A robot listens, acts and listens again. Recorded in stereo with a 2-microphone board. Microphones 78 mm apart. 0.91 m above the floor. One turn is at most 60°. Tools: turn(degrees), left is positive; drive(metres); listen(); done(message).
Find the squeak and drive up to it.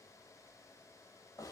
listen()
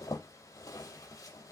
listen()
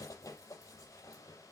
done("I can't make out a squeak to turn to.")